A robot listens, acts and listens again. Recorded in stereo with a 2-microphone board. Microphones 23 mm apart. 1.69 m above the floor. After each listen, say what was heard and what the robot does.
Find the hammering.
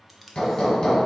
The hammering: about 30° left or 150° left. Turn 30° left.
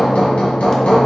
So it is at 120° left. Turn 120° left.
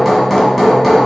Found it: hammering, straight ahead.